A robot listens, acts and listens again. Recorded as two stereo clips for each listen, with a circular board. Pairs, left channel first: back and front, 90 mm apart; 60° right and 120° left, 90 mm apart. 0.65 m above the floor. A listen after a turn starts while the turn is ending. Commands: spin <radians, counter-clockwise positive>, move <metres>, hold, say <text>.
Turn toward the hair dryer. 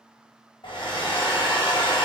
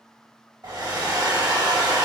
spin 2.79
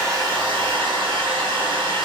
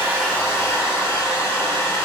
say Facing the hair dryer, under 1 m away.